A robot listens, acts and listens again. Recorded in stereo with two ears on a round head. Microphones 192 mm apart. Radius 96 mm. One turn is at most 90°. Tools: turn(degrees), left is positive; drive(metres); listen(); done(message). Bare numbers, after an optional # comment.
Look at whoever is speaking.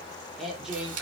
turn(-30)
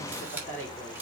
# So it is at 10° left.
turn(10)
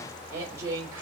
# The woman speaking is now 15° right.
turn(-15)
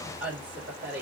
# The woman speaking is now 10° right.
turn(-10)
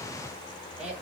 done("Found it: a woman speaking, straight ahead.")